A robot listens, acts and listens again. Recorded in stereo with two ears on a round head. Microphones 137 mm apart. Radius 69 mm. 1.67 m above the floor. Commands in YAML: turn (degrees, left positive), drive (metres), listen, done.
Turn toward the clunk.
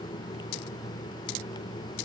listen: true
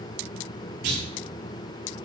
turn: -90
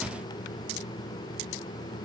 done: "I heard a clunk from this way, but can't make it out now."